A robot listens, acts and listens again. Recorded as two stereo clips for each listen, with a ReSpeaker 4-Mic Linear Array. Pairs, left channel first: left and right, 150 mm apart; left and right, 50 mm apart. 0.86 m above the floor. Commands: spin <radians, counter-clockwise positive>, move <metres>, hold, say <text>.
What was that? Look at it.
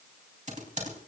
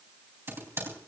spin -0.96
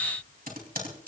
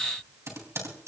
spin -1.22
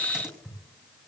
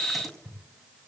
say Found it: typing on a keyboard, straight ahead, 2 to 4 m away.